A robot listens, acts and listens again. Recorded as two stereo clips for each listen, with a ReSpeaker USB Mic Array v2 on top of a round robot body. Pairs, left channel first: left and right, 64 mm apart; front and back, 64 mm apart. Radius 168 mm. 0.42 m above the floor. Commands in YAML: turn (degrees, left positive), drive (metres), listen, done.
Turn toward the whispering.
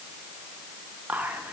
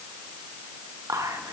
turn: -155
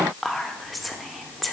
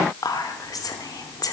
done: "Facing the whispering, 1 to 2 m away."